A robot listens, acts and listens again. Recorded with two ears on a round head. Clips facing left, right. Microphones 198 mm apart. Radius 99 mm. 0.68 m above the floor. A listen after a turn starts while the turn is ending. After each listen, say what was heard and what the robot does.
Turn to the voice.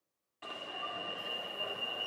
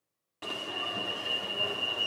Keep listening.
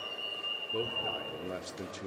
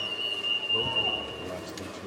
The man speaking: about 20° left or 160° left. Turn 20° left.
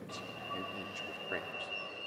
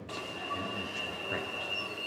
Keep listening.
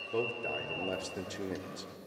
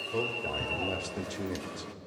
Facing the man speaking.